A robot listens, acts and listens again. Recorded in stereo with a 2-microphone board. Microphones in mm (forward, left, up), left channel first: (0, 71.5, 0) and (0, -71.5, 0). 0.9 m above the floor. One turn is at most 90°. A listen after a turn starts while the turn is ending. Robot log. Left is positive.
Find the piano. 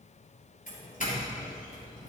cmd idle
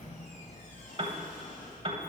note: The piano: about 45° right or 135° right.
cmd yaw -45
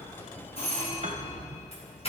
cmd idle
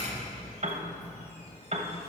note: So it is at 80° right.
cmd yaw -80
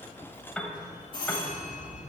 end: Found it: a piano, straight ahead.